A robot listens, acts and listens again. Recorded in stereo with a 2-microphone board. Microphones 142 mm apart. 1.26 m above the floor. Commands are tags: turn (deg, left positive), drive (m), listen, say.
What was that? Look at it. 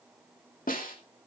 <turn deg="90"/>
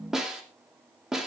<say>Found it: a snare drum, straight ahead.</say>